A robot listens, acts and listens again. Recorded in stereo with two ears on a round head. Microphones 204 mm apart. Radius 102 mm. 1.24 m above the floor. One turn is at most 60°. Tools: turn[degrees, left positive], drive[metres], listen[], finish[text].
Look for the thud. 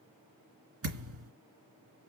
Thought: The thud: about 70° right or 110° right.
Action: turn[-60]
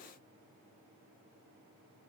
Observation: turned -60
Action: listen[]
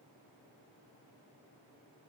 Action: finish[I heard a thud, but can't make it out now. It was about 10° right or 50° right.]